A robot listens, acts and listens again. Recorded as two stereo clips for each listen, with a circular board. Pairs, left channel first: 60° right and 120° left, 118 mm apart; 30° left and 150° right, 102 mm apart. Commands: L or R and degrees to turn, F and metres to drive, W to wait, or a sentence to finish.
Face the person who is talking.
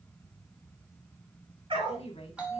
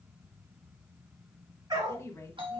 R30
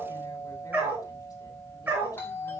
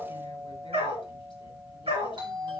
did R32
W
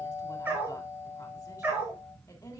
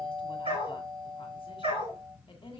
Facing the woman speaking, 1 to 2 m away.